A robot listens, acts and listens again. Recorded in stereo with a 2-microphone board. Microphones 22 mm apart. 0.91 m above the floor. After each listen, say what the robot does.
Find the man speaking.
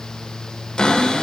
Keep listening.
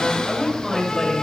Turn 30° left.
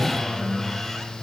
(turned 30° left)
Keep listening.
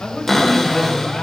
Turn 135° left.
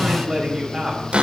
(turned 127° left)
Found it: a man speaking, straight ahead.